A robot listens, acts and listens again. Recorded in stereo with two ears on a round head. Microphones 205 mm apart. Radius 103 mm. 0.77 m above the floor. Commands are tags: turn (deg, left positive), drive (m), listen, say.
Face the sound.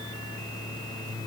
<listen/>
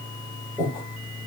<turn deg="30"/>
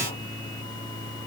<listen/>
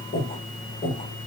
<turn deg="150"/>
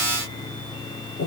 <turn deg="60"/>
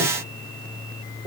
<listen/>
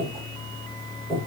<say>Found it: breathing, straight ahead.</say>